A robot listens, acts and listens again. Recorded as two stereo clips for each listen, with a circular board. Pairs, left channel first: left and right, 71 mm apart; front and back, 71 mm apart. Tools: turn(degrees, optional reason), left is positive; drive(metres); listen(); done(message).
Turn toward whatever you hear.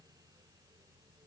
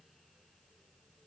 listen()
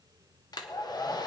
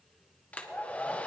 turn(degrees=70, reason="The hair dryer: 70° left.")
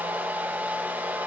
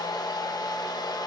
turn(degrees=-25, reason="The hair dryer is now 25° right.")
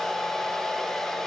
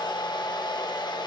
done("Facing the hair dryer.")